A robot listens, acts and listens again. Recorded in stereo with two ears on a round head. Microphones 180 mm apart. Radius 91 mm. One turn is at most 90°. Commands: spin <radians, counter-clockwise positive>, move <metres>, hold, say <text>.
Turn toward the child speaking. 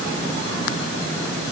hold
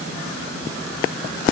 hold
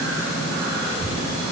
spin 0.61
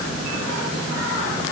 hold
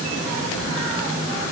spin 1.57
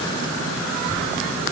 say Facing the child speaking, over 4 m away.